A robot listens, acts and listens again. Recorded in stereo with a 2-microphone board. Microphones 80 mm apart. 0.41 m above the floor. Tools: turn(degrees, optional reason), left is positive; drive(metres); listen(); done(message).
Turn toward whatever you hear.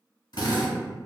turn(degrees=60, reason="The drill: about 60° left or 120° left.")
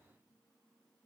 listen()
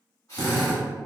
turn(degrees=50, reason="So it is at 50° left.")
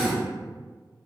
done("Facing the drill.")